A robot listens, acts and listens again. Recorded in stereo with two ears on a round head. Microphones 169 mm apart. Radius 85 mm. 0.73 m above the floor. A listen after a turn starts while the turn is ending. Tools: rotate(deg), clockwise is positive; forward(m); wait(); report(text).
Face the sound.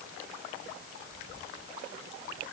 wait()
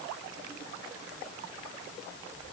wait()
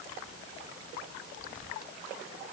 report("I can't make out anything to turn to.")